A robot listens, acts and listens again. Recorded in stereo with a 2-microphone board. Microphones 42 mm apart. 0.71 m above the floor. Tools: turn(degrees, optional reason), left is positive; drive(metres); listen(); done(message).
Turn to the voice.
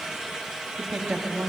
turn(degrees=-40, reason="The woman speaking: about 40° right or 140° right.")
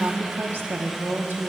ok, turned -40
turn(degrees=-90, reason="So it is at 90° right.")
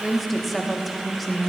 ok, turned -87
done("Facing the woman speaking, under 1 m away.")